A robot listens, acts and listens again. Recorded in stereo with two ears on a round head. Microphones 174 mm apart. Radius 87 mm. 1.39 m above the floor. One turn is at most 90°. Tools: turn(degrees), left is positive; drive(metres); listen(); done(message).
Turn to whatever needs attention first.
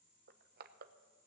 listen()
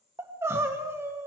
turn(degrees=-30)
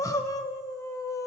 turn(degrees=15)
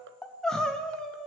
done("Facing the crying, 1 to 2 m away.")